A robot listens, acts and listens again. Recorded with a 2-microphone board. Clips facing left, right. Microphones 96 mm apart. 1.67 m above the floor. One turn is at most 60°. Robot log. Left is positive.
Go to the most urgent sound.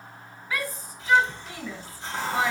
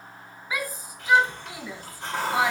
cmd yaw -30
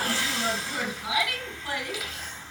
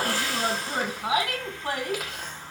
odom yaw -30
note: So it is at 130° right.
cmd yaw -60
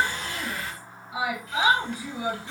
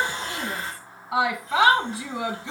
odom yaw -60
note: The shout is now 90° right.
cmd yaw -60
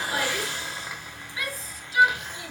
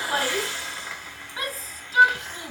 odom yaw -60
note: The shout is now 45° right.
cmd yaw -45
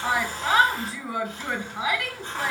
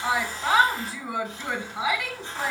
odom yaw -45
cmd fwd 1.0
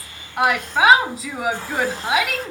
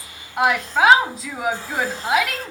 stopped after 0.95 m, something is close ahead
end: Arrived at the shout, straight ahead.